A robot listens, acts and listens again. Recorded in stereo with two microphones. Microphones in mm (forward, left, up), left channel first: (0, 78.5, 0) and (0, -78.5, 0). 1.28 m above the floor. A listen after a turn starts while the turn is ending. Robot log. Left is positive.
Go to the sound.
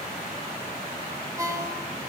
note: The ringtone: about 20° right or 160° right.
cmd yaw -20
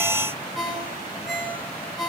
cmd fwd 1.0
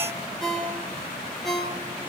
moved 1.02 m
cmd fwd 1.0
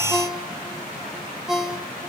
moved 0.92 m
cmd fwd 1.0
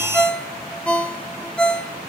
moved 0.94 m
cmd fwd 1.0
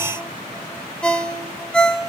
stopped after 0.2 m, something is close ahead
end: Arrived at the ringtone, straight ahead.